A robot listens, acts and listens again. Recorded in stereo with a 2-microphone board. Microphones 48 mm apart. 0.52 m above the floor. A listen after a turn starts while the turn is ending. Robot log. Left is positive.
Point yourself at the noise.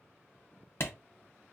note: The clap: about 60° left or 120° left.
cmd yaw +60
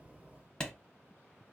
note: So it is at 20° left.
cmd yaw +20
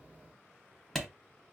end: Found it: a clap, straight ahead, under 1 m away.